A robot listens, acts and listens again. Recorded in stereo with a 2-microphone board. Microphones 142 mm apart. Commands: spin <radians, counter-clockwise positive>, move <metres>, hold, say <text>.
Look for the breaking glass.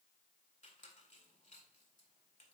hold
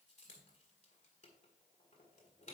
hold
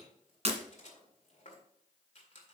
spin -0.87
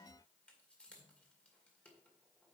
hold
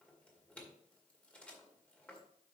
say I heard breaking glass, but can't make it out now. It was about straight ahead or 80° right.